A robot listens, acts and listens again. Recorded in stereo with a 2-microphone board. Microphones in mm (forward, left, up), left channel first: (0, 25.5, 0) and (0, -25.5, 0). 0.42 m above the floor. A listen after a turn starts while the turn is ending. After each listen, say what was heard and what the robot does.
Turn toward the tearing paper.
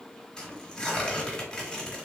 Turn 30° left.
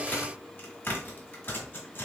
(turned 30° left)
So it is at 140° left. Turn 140° left.
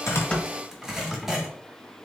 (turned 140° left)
Facing the tearing paper, 1 to 2 m away.